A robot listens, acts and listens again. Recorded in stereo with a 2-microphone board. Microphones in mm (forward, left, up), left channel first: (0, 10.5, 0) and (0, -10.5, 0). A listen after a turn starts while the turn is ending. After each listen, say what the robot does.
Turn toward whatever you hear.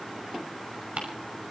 Turn 90° right.
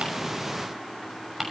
Turn 10° right.
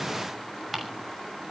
Facing the ticking.